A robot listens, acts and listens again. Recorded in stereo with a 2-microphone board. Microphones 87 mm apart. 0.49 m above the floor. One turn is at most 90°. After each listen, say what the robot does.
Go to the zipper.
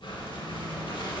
Keep listening.
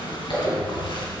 Turn 70° left.
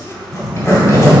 Turn 35° left.
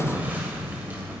Keep listening.
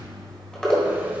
Turn 10° left.
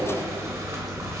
Keep listening.
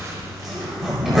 Drive 1.0 m forward.
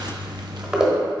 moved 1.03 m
Turn 10° right.
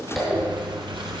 Drive 1.0 m forward.
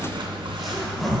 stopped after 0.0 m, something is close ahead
Arrived at the zipper, straight ahead.